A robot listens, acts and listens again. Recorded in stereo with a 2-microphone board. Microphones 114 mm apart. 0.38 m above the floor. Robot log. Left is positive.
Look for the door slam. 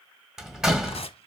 cmd yaw -30
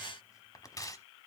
cmd idle
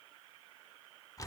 end: I heard a door slam, but can't make it out now. It was about 25° left or 145° right.